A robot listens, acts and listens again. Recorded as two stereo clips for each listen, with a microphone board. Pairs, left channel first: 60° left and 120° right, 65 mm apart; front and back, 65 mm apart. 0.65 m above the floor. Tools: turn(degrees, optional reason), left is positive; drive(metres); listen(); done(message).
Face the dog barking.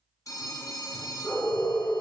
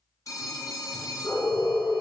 turn(degrees=-55, reason="The dog barking: 55° right.")
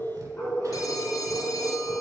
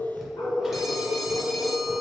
turn(degrees=-10, reason="The dog barking is now 10° right.")
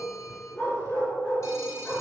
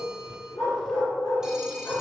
turn(degrees=-10, reason="The dog barking is now 10° right.")
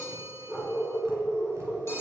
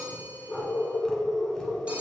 done("Found it: a dog barking, straight ahead.")